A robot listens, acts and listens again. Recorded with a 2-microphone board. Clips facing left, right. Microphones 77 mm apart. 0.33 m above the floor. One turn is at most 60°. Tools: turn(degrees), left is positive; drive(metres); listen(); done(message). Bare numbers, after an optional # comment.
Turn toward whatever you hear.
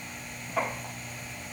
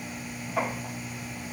listen()
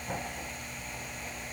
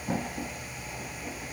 listen()
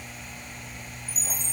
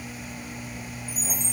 turn(-60)
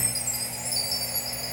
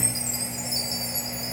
# So it is at 20° right.
turn(-20)
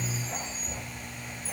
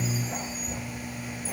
done("Facing the chime.")